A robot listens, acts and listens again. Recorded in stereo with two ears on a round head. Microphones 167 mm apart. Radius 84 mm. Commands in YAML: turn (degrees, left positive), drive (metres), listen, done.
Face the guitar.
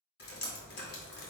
listen: true
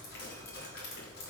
listen: true
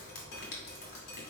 done: "I can't make out a guitar, only dripping."